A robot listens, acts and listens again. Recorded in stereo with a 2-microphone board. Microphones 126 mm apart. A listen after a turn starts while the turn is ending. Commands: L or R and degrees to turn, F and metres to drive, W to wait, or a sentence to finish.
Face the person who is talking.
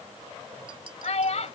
L65
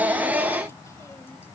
W
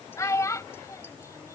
L30
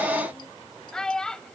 Facing the child speaking.